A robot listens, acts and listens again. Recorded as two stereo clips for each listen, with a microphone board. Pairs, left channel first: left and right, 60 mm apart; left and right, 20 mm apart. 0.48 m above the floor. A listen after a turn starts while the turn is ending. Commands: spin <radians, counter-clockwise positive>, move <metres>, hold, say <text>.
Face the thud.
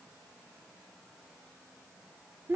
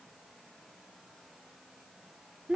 hold
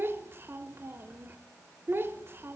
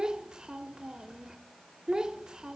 hold
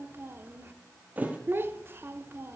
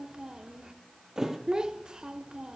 spin -0.52
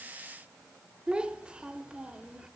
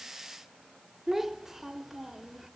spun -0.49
hold
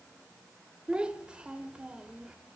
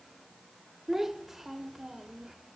say I heard a thud, but can't make it out now. It was about straight ahead or 125° right.